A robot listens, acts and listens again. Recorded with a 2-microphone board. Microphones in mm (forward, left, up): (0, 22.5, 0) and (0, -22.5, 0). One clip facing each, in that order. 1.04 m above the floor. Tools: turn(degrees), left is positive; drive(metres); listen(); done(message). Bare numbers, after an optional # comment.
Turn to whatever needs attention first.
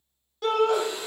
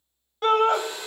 # The shout: about 35° right or 145° right.
turn(-35)
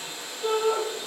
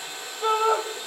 # So it is at 100° right.
turn(-100)
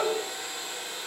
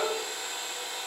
done("Found it: a shout, straight ahead, under 1 m away.")